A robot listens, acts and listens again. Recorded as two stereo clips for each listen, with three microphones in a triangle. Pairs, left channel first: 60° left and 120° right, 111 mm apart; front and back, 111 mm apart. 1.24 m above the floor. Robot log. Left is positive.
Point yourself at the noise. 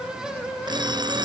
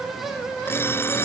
note: The alarm clock: 70° right.
cmd yaw -70
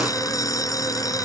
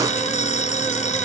end: Found it: an alarm clock, straight ahead.